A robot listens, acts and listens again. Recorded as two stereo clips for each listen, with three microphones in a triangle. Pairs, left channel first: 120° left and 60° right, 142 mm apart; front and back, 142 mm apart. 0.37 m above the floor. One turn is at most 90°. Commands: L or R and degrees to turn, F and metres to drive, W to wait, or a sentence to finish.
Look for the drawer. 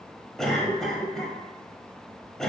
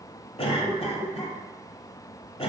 W
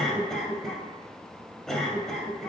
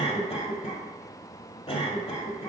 W
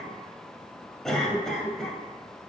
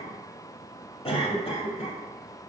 I can't make out a drawer, only a cough.